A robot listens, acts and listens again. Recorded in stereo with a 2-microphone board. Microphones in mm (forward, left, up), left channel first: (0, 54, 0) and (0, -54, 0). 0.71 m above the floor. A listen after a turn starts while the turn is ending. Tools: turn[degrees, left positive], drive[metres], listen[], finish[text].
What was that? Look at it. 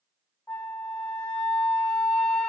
Action: turn[30]
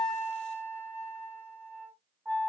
Thought: So it is at 20° right.
Action: turn[-20]
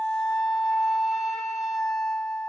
Action: finish[Facing the flute, under 1 m away.]